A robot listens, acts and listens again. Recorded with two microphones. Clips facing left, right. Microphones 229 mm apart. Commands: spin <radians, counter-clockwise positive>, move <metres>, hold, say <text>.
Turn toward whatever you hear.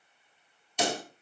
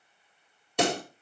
spin -1.13
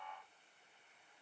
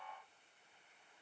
hold
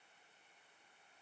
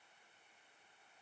say I heard a pop, but can't make it out now. It was about straight ahead or 50° right.